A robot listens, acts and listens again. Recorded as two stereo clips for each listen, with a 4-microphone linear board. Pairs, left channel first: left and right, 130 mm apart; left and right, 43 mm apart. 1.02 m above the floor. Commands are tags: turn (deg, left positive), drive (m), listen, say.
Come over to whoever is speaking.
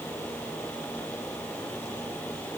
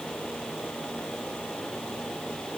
<listen/>
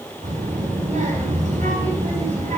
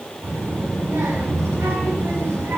<turn deg="-90"/>
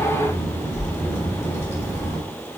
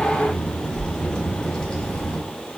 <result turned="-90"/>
<turn deg="15"/>
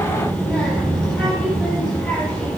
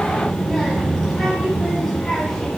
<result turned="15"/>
<drive m="1.0"/>
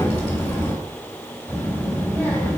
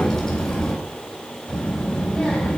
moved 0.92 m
<drive m="1.0"/>
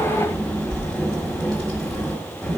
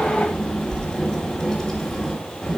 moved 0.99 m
<drive m="1.0"/>
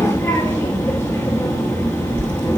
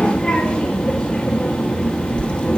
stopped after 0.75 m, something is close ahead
<turn deg="15"/>
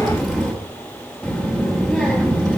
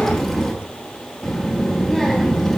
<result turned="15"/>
<say>I am next to the child speaking.</say>